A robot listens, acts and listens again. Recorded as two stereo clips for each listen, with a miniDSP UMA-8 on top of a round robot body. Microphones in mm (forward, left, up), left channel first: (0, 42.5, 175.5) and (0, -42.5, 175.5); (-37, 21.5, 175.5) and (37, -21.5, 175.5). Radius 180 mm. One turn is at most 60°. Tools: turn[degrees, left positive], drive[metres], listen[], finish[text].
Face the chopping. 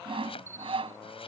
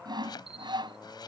Thought: The chopping: 110° left.
Action: turn[60]
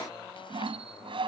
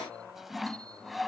Thought: Nothing new. It was at 50° left.
Action: turn[50]
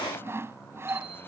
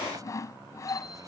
Action: listen[]
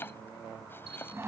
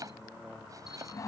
Thought: The chopping is now 20° left.
Action: turn[20]
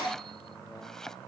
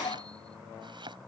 Action: finish[Found it: chopping, straight ahead.]